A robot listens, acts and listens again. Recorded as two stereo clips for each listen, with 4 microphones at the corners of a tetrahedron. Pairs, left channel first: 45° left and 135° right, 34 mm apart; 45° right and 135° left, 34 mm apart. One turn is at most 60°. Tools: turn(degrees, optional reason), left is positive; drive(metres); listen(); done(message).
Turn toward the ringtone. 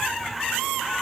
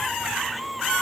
listen()
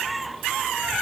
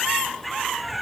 listen()
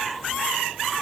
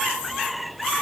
done("I can't make out a ringtone to turn to.")